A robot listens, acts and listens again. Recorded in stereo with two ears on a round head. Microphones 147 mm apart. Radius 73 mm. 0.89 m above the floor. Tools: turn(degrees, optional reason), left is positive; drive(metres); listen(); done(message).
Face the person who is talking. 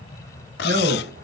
turn(degrees=-60, reason="The man speaking: about 60° right or 120° right.")
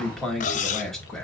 done("Facing the man speaking.")